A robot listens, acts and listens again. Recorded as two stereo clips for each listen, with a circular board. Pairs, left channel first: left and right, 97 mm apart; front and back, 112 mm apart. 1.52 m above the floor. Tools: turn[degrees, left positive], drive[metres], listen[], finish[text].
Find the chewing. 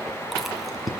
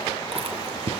Thought: The chewing: straight behind.
Action: turn[180]
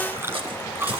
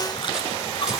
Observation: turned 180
Thought: The chewing is now 30° right.
Action: turn[-30]
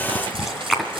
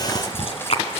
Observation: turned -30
Action: finish[Facing the chewing.]